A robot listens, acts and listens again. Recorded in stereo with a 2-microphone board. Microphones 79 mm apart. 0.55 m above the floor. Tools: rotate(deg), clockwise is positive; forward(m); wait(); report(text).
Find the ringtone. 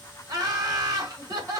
wait()
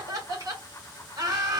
wait()
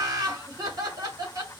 report("I can't make out a ringtone to turn to.")